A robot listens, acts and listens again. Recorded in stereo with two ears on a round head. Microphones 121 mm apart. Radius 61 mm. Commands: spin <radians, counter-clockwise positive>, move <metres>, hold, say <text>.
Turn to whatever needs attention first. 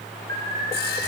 spin -1.13
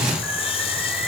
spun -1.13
hold
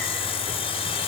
hold
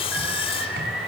say Facing the alarm, over 4 m away.